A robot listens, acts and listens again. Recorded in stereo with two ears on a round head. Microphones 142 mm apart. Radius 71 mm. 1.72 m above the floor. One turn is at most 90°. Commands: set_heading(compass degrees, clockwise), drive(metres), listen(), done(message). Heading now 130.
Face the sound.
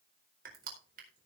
set_heading(190)
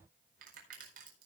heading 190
set_heading(250)
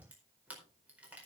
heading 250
set_heading(260)
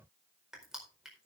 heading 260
done("Found it: crushing, straight ahead.")